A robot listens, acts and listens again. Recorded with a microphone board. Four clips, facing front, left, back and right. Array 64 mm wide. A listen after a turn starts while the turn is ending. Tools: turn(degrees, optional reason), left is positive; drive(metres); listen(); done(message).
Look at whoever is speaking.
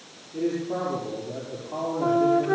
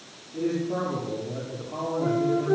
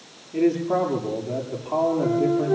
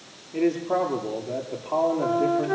turn(degrees=-125, reason="The man speaking: 125° right.")
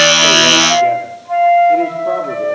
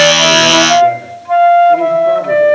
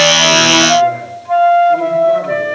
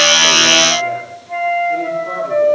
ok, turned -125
listen()
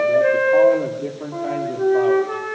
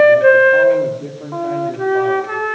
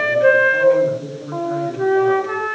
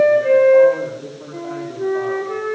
turn(degrees=20, reason="The man speaking is now 20° left.")
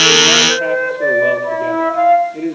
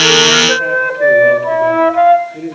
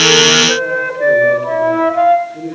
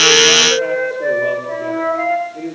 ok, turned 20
done("Facing the man speaking.")